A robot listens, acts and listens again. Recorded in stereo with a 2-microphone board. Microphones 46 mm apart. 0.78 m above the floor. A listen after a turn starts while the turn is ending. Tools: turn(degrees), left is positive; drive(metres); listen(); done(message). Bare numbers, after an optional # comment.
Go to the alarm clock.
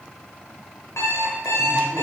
turn(90)
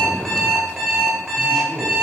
drive(1.0)
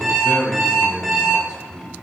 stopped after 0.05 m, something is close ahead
done("Blocked. The alarm clock is further on, straight ahead.")